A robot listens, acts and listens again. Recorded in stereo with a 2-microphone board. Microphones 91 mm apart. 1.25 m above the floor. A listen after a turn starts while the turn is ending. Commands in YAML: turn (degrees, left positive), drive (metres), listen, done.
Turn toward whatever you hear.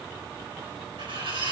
turn: -90
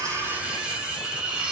turn: -15
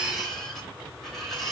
done: "Facing the cutlery clinking, 2 to 4 m away."